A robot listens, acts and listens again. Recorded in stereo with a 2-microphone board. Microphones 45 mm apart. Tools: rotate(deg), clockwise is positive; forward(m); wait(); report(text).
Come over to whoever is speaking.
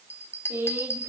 rotate(65)
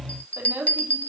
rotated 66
rotate(50)
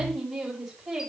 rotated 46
forward(1.0)
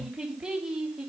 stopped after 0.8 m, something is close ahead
rotate(10)
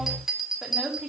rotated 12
report("Something is in my way. I am facing the woman speaking but have not reached it.")